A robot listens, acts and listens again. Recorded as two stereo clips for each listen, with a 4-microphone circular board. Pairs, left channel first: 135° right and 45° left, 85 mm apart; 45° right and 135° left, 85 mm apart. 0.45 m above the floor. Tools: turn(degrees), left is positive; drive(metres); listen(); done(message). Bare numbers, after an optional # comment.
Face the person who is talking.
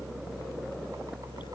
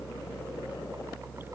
listen()
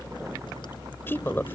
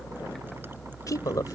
# The woman speaking: 80° right.
turn(-80)
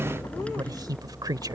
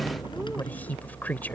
# The woman speaking is now 20° left.
turn(20)
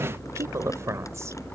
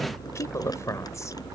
done("Facing the woman speaking.")